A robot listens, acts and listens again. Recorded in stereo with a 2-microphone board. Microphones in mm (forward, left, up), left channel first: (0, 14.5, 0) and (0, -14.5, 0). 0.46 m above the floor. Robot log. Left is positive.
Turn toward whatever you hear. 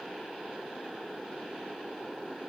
cmd idle
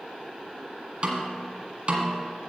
note: The snare drum: about 35° right or 145° right.
cmd yaw -35
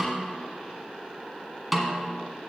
end: Found it: a snare drum, straight ahead.